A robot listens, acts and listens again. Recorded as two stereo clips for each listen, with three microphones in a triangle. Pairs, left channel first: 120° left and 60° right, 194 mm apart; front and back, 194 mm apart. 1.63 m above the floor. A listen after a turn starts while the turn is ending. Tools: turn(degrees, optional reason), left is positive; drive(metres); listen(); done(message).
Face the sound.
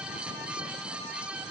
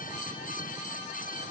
listen()
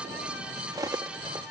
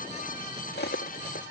turn(degrees=10, reason="The cutlery clinking: 10° left.")
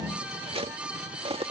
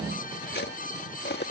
done("Found it: cutlery clinking, straight ahead.")